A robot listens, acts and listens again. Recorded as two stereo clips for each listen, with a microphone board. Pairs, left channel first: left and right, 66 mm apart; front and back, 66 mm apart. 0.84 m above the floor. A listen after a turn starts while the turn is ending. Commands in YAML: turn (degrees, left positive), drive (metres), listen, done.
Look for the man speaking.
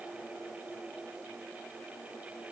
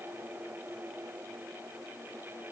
listen: true
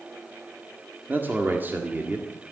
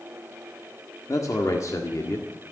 turn: -30
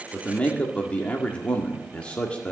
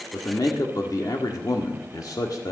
turn: 15
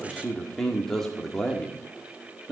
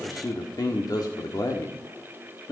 done: "Facing the man speaking."